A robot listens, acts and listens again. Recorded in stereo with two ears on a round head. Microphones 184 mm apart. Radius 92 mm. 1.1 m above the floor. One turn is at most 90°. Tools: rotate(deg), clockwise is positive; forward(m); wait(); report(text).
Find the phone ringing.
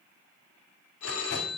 rotate(-75)
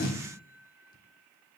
wait()
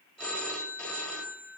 report("Facing the phone ringing, 1 to 2 m away.")